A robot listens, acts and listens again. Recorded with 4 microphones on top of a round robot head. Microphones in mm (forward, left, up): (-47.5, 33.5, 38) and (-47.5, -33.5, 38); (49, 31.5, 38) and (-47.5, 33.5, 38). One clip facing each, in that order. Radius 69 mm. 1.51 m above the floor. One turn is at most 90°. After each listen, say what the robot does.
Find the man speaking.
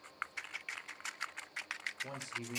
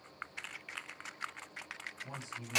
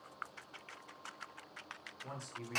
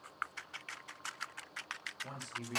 Turn 85° left.
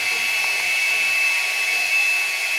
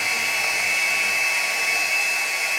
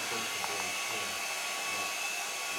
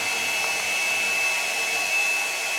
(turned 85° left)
Keep listening.
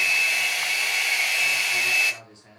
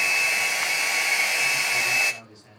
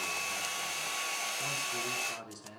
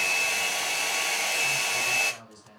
Turn 20° left.
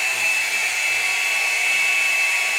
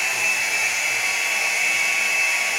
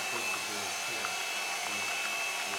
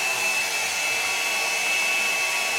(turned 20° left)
Keep listening.
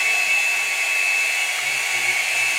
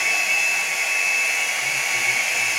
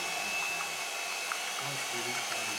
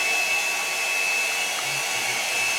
Keep listening.
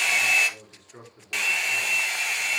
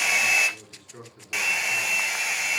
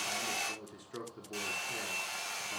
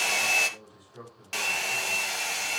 Found it: a man speaking, straight ahead, over 4 m away.